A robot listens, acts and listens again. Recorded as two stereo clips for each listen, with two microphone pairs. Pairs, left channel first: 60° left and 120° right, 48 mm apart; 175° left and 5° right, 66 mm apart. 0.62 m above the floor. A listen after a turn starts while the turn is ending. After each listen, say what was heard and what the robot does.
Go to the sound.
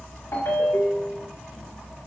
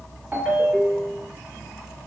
The ringtone: 70° left. Turn 70° left.
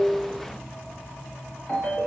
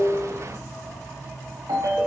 The ringtone is now 15° right. Turn 15° right.
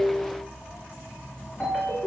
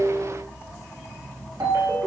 Drive 1.0 m forward.
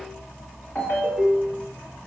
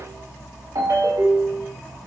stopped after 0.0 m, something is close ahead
Blocked. The ringtone is further on, straight ahead.